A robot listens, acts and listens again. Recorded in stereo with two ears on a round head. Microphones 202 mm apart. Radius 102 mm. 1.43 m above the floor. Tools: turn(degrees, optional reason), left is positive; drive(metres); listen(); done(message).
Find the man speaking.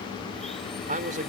turn(degrees=-35, reason="The man speaking: about 35° right or 145° right.")
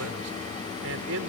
turn(degrees=-105, reason="So it is at 105° right.")
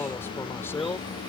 turn(degrees=10, reason="The man speaking is now 10° left.")
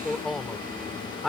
done("Found it: a man speaking, straight ahead.")